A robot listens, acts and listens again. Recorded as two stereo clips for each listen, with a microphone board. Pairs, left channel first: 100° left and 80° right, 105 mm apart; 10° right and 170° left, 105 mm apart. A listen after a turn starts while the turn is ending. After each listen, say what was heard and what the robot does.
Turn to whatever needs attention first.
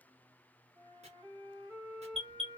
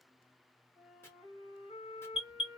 The alarm: 10° left. Turn 10° left.
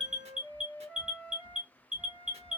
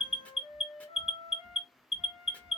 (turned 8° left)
Facing the alarm.